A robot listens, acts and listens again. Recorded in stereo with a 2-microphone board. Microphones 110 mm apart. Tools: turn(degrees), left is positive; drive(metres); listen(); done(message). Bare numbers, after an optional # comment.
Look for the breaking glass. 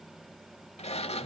listen()
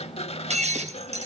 turn(-90)
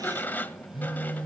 done("I heard breaking glass from this way, but can't make it out now.")